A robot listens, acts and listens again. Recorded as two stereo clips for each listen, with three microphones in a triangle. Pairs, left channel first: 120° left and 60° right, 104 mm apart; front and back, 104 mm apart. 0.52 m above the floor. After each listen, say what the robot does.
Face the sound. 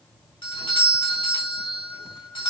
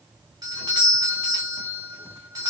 Turn 135° left.
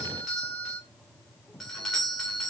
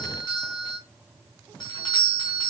Turn 35° left.
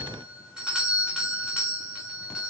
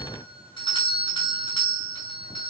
Turn 20° left.
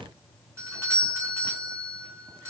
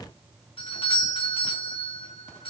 Found it: a doorbell, straight ahead, 2 to 4 m away.